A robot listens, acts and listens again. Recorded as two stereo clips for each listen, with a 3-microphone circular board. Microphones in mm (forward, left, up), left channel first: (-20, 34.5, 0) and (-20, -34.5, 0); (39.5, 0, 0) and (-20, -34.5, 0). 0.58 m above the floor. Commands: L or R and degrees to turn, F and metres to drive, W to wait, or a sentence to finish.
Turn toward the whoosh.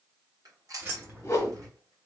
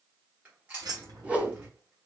L140
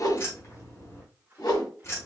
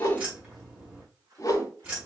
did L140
L70
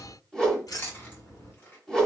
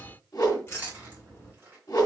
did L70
L10
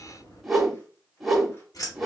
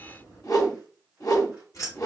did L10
Found it: a whoosh, straight ahead.